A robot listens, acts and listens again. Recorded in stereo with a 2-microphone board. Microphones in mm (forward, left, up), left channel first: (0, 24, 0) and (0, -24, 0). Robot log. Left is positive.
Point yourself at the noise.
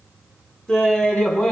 note: The laughter: about 20° left or 160° left.
cmd yaw +20
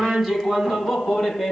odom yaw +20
cmd yaw +30
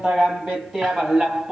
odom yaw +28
note: So it is at 10° right.
cmd yaw -10
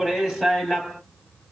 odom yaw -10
end: Facing the laughter, 2 to 4 m away.